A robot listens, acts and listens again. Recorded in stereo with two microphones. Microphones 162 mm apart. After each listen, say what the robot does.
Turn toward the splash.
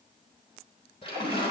Turn 35° left.
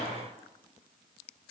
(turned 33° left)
Keep listening.
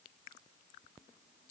I heard a splash, but can't make it out now. It was about straight ahead or 115° left.